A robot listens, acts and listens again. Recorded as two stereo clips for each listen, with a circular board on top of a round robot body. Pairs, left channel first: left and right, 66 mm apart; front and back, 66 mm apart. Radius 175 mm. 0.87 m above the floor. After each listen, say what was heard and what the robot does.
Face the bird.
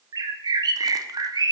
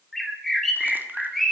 The bird: 85° right. Turn 85° right.
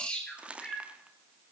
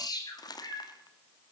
The bird is now 15° left. Turn 15° left.
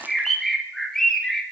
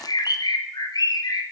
The bird is now 10° left. Turn 10° left.
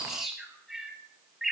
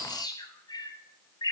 Facing the bird.